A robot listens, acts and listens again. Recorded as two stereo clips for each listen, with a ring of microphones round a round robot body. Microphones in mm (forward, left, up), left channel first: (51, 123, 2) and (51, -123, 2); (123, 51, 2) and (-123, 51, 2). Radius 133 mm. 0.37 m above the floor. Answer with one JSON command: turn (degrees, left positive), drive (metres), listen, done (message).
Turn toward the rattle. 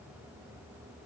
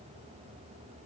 {"listen": true}
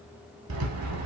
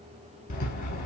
{"turn": -65}
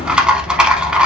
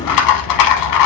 {"done": "Facing the rattle, under 1 m away."}